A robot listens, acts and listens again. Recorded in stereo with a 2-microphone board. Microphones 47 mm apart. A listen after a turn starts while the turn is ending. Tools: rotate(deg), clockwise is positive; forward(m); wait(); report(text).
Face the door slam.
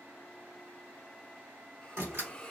rotate(75)
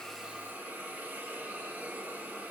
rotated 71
wait()
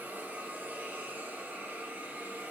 report("I heard a door slam, but can't make it out now. It was about 5° right or 35° right.")